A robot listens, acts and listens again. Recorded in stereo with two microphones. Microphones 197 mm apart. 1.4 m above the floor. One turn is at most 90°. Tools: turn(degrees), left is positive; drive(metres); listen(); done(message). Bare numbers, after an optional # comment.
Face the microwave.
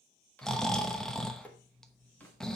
turn(30)
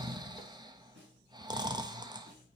listen()
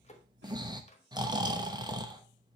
# So it is at 145° left.
turn(90)
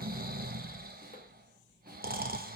# Nothing new. It was at 55° left.
turn(55)
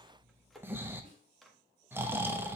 done("Found it: a microwave, straight ahead.")